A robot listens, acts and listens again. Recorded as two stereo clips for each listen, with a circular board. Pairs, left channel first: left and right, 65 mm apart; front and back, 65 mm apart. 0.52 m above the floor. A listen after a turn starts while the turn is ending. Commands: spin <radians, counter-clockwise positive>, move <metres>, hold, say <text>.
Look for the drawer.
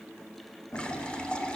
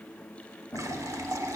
spin 1.05
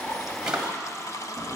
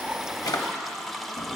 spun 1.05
spin -0.26
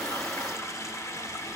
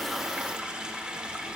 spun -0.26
hold
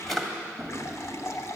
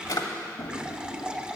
say Found it: a drawer, straight ahead, 1 to 2 m away.